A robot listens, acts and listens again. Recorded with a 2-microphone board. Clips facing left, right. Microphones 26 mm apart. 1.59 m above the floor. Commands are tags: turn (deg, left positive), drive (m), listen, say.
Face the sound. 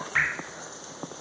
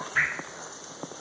<turn deg="70"/>
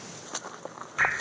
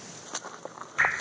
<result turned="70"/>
<say>Found it: dripping, straight ahead.</say>